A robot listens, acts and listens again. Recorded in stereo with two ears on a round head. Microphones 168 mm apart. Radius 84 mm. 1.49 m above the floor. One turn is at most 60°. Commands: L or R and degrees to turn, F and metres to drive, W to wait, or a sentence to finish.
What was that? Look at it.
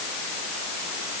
W
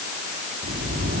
R50
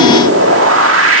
R60
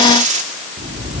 R40
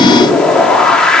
Facing the whoosh.